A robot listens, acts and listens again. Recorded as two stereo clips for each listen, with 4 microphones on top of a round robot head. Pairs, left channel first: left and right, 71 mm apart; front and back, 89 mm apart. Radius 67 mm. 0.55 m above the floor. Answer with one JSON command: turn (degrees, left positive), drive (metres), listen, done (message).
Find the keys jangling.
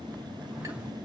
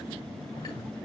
{"listen": true}
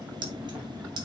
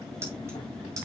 {"turn": -120}
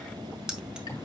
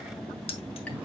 {"turn": -10}
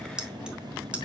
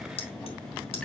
{"turn": -15}
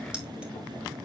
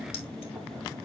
{"listen": true}
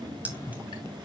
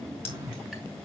{"listen": true}
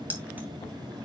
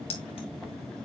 {"turn": -25}
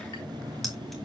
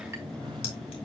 {"listen": true}
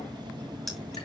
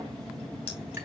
{"listen": true}
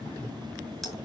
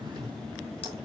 {"done": "Facing where the keys jangling came from. I can't hear it now."}